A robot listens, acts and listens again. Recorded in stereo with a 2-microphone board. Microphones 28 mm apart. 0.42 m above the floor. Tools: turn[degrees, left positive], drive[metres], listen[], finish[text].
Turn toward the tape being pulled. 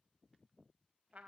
Action: listen[]
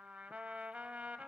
Action: listen[]
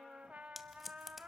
Action: turn[-30]
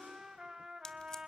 Action: listen[]
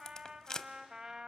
Thought: So it is at 25° left.
Action: turn[25]
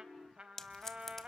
Thought: The tape being pulled is now 15° left.
Action: turn[15]
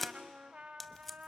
Action: finish[Found it: tape being pulled, straight ahead, under 1 m away.]